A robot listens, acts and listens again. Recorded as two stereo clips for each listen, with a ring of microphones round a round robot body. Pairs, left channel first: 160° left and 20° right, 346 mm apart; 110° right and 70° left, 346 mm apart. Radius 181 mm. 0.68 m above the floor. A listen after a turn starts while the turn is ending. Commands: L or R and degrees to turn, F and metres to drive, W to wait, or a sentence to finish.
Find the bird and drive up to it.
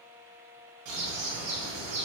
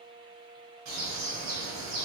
L20
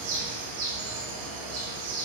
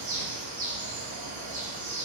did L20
F1.0
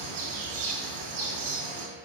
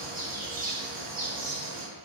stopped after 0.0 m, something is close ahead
Blocked. The bird is further on, straight ahead.